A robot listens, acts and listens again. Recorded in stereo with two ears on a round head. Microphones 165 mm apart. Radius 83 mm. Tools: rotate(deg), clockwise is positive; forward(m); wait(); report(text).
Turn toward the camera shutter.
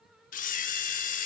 rotate(-45)
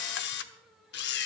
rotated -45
rotate(-80)
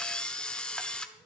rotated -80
report("Facing the camera shutter.")